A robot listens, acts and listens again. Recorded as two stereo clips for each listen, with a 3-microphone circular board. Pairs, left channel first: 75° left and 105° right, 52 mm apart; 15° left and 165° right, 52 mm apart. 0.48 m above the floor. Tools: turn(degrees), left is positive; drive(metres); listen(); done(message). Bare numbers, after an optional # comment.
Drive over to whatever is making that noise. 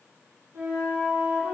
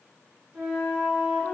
# The flute: 105° right.
turn(-105)
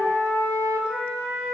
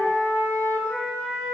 # The flute is now 30° left.
turn(30)
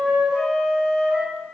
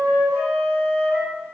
drive(1.0)
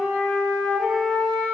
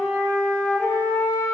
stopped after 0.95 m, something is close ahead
done("Arrived at the flute, straight ahead.")